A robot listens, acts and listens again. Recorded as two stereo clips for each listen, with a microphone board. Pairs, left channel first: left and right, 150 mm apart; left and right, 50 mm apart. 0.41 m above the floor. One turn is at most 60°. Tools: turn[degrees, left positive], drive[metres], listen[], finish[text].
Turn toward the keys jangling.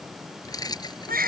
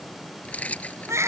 Thought: The keys jangling: about 30° left or 150° left.
Action: turn[30]
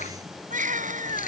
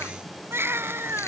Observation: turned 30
Action: listen[]
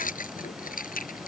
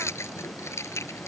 Thought: So it is at 100° left.
Action: turn[60]
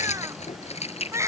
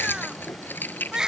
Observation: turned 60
Thought: The keys jangling is now 45° left.
Action: turn[45]
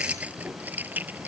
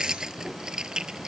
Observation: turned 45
Thought: The keys jangling is now 10° right.
Action: turn[-10]
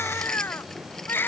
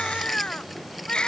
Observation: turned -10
Action: listen[]
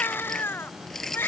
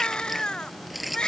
Action: finish[Found it: keys jangling, straight ahead.]